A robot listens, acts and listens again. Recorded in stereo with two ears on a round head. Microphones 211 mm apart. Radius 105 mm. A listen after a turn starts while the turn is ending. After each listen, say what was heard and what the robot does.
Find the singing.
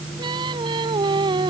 The singing: about 20° right or 160° right. Turn 20° right.
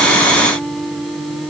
Found it: singing, straight ahead.